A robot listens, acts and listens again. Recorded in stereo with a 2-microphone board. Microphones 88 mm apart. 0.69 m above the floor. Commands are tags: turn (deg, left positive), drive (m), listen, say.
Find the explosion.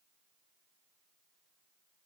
<listen/>
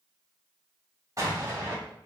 <turn deg="-40"/>
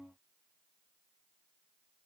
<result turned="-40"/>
<listen/>
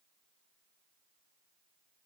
<say>I heard an explosion, but can't make it out now. It was about straight ahead or 100° right.</say>